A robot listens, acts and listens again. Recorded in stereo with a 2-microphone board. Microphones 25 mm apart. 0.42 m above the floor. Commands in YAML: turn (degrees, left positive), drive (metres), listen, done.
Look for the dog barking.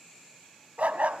turn: -70
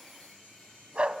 turn: -45
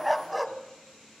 done: "Facing the dog barking, 1 to 2 m away."